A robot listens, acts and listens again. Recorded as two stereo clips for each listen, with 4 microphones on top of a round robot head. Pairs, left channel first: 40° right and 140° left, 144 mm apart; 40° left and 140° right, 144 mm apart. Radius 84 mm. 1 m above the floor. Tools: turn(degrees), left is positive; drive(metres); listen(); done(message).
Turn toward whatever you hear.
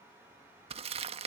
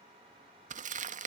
turn(degrees=-175)
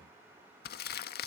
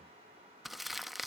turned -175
turn(degrees=-50)
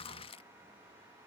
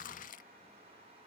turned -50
turn(degrees=10)
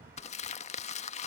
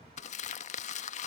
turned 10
done("Facing the crumpling.")